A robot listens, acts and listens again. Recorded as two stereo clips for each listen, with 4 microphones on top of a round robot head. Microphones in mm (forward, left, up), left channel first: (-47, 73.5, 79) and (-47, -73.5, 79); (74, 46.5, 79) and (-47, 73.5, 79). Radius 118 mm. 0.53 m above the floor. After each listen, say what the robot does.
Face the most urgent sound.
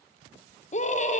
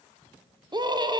Turn 115° left.
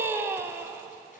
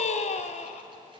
Turn 15° right.
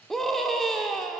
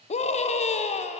Facing the scream, 1 to 2 m away.